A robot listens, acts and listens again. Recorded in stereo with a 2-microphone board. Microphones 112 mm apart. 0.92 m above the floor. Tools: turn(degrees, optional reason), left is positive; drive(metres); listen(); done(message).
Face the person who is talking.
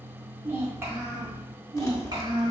turn(degrees=-40, reason="The child speaking: about 40° right or 140° right.")
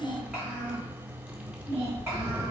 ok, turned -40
turn(degrees=-25, reason="So it is at 25° right.")
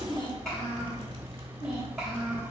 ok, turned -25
done("Facing the child speaking.")